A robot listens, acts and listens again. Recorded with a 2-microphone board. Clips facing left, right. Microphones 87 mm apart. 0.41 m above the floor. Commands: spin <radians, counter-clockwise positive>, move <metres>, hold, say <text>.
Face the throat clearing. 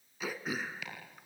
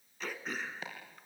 spin 0.52
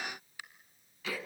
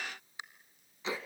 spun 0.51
spin -0.35
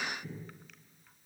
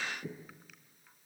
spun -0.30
hold
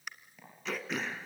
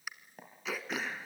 say Found it: throat clearing, straight ahead.